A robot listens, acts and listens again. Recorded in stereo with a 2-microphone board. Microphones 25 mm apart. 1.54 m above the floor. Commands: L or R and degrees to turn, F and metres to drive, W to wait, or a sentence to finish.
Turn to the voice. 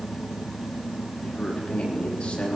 L50
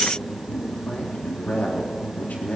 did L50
L80
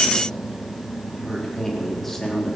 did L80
L10
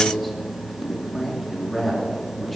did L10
Found it: a man speaking, straight ahead.